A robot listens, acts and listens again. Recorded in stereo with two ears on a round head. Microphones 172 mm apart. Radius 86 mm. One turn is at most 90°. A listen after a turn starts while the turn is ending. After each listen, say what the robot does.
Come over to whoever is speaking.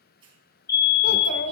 Turn 65° left.
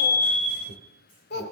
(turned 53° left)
Turn 60° left.
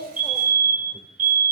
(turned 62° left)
Keep listening.
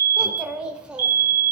Drive 1.0 m forward.
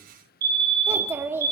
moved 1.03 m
Turn 15° right.
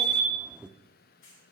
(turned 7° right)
Drive 1.0 m forward.
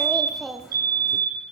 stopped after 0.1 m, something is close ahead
I am next to the child speaking.